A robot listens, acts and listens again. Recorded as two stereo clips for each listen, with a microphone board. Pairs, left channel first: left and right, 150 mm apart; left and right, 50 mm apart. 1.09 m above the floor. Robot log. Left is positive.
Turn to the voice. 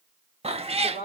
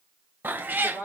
note: The woman speaking: about 45° right or 135° right.
cmd yaw -45
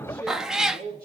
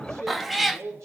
note: So it is at 105° right.
cmd yaw -105
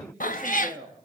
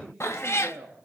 end: Found it: a woman speaking, straight ahead, over 4 m away.